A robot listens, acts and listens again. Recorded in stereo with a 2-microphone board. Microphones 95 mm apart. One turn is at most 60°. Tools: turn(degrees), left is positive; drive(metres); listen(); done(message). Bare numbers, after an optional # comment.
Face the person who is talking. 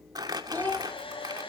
# The child speaking: about 20° left or 160° left.
turn(20)
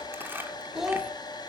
done("Facing the child speaking, 2 to 4 m away.")